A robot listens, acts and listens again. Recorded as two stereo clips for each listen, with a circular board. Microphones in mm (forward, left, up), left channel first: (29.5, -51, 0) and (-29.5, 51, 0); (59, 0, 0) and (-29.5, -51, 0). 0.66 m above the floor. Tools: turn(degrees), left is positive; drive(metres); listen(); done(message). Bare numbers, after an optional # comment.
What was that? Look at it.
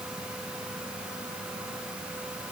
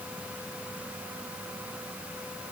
listen()
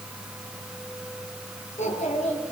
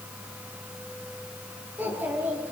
# The child speaking: 75° right.
turn(-75)
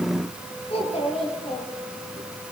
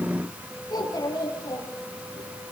# The child speaking is now 25° right.
turn(-25)
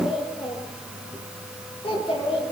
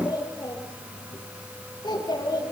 # The child speaking is now 20° right.
turn(-20)
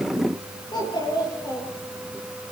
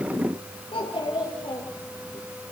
done("Facing the child speaking, over 4 m away.")